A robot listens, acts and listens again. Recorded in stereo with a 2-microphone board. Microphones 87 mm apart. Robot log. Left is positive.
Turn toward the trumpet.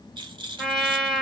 cmd yaw +30
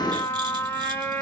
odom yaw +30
note: So it is at 150° left.
cmd yaw +150
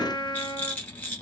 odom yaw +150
note: The trumpet is now 65° left.
cmd yaw +65
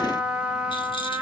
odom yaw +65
note: The trumpet is now 15° right.
cmd yaw -15
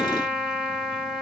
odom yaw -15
end: Found it: a trumpet, straight ahead.